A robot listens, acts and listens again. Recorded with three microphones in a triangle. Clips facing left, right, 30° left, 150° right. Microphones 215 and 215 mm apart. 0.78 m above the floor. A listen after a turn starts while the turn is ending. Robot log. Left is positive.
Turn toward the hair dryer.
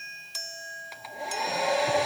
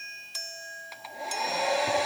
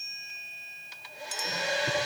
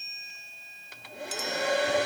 note: The hair dryer: straight behind.
cmd yaw +180
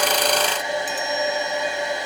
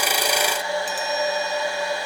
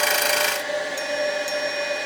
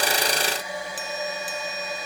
note: The hair dryer is now 20° left.
cmd yaw +20
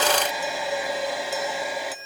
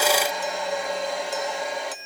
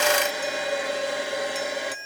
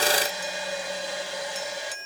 end: Found it: a hair dryer, straight ahead.